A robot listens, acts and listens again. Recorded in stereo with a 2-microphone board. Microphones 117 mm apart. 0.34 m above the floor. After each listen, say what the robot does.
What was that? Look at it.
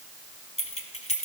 Turn 70° left.
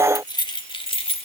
Turn 55° left.
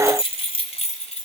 Turn 65° left.
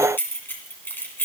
Turn 15° left.
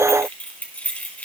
Turn 10° left.
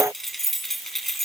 Found it: keys jangling, straight ahead, 2 to 4 m away.